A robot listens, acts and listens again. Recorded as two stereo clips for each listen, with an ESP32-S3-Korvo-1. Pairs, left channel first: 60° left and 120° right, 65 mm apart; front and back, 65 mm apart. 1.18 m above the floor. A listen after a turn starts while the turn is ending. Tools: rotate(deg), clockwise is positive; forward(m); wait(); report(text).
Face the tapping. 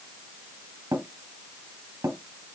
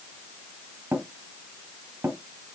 rotate(135)
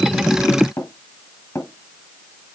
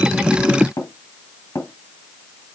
rotate(-25)
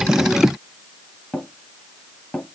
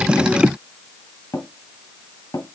rotate(10)
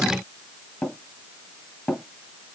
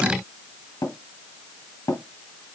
report("Facing the tapping, 2 to 4 m away.")